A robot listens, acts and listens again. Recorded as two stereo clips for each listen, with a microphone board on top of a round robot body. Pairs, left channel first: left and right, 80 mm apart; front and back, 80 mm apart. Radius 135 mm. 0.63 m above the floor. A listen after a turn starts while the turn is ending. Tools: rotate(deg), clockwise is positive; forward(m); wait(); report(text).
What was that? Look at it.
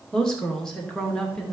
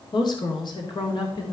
report("Found it: a woman speaking, straight ahead.")